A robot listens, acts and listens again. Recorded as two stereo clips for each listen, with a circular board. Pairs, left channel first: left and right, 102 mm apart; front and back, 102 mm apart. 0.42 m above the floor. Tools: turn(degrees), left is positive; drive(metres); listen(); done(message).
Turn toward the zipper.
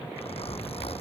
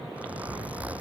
turn(degrees=105)
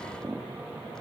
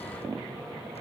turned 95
turn(degrees=10)
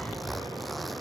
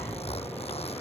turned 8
done("Facing the zipper.")